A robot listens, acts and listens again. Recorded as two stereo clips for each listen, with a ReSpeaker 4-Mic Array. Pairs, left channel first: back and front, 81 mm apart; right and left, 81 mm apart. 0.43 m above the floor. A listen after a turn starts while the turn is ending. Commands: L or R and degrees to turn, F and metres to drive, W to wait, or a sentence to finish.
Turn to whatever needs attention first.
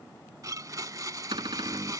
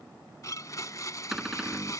W
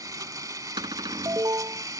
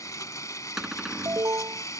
L40
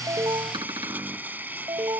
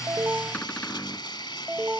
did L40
L15
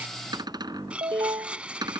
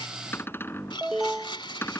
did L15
Facing the alarm.